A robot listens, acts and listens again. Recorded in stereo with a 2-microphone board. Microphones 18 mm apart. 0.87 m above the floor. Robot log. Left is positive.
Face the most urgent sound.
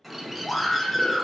note: The scream: about 50° left or 130° left.
cmd yaw +50
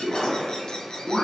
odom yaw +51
cmd idle
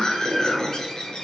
note: So it is at 70° left.
cmd yaw +70
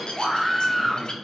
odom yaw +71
end: Found it: a scream, straight ahead, under 1 m away.